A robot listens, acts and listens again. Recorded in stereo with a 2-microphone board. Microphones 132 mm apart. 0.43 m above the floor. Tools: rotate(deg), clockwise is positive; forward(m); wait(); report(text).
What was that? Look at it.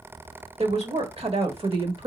rotate(40)
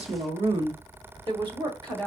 rotate(40)
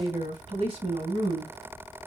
rotate(115)
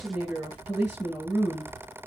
report("Found it: a woman speaking, straight ahead.")